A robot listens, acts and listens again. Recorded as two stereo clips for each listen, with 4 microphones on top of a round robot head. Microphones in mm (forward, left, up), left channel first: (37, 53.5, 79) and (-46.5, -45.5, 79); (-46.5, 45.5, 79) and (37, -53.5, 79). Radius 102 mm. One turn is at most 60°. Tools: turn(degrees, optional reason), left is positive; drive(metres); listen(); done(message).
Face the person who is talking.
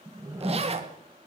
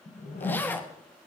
listen()
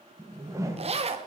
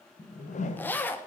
listen()
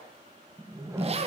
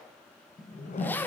done("I can't make out anyone speaking, only a whoosh and a zipper.")